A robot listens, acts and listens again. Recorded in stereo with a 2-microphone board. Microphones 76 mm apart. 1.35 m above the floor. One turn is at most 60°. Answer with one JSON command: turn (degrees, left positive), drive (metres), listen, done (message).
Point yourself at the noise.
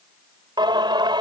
{"turn": -60}
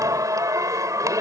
{"turn": -45}
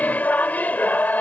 {"turn": 20}
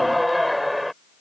{"done": "Found it: singing, straight ahead."}